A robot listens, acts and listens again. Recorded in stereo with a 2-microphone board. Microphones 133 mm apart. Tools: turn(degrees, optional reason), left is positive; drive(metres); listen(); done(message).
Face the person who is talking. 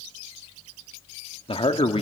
turn(degrees=45, reason="The man speaking: about 45° left or 135° left.")
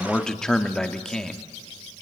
done("Found it: a man speaking, straight ahead, 1 to 2 m away.")